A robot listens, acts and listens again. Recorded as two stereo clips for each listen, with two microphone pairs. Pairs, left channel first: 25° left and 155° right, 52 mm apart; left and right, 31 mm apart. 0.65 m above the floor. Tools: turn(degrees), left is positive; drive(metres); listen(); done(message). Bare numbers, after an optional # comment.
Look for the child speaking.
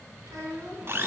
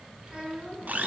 # The child speaking: 155° right.
turn(-155)
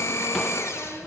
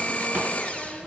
listen()
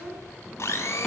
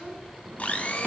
listen()
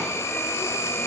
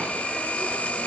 done("Facing where the child speaking came from. I can't hear it now.")